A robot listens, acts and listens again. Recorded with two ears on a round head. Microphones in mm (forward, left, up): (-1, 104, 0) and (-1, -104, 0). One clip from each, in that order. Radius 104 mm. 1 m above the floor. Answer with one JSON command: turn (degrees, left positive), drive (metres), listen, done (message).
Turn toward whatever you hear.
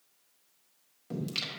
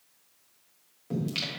{"turn": 30}
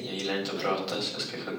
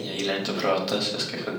{"turn": -15}
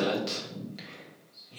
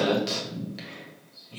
{"done": "Found it: singing, straight ahead."}